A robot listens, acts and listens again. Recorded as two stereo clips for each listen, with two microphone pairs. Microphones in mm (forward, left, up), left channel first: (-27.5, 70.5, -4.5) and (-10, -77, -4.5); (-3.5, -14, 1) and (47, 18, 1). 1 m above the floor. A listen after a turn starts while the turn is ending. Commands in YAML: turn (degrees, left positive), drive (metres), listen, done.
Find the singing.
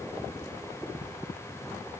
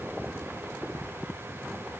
listen: true
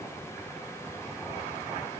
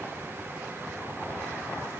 listen: true
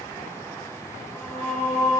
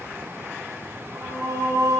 turn: 30
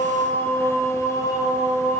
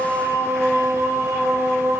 turn: 40
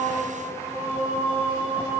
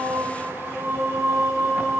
done: "Facing the singing, 1 to 2 m away."